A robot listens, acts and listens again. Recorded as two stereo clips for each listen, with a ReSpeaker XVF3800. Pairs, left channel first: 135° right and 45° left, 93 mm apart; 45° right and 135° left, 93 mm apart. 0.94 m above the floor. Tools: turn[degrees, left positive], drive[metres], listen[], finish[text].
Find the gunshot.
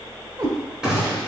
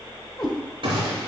Thought: The gunshot: 125° left.
Action: turn[125]
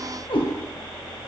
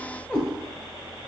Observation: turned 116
Thought: Nothing new. It was at 10° left.
Action: turn[10]
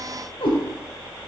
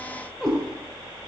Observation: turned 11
Action: finish[Facing where the gunshot came from. I can't hear it now.]